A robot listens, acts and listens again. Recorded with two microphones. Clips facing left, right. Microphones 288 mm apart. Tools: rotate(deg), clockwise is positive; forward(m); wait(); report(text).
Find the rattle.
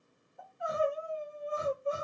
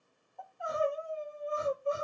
wait()
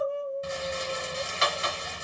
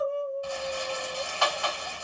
rotate(-25)
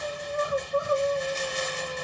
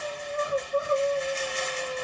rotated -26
rotate(-130)
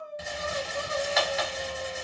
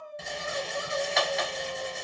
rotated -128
report("Facing the rattle, under 1 m away.")